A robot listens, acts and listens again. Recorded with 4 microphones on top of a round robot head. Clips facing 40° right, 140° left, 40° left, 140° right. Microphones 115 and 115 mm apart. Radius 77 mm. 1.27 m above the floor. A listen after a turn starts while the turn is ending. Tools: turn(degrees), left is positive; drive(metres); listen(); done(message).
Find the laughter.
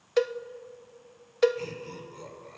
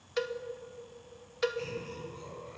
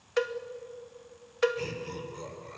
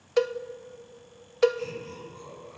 done("Found it: laughter, straight ahead.")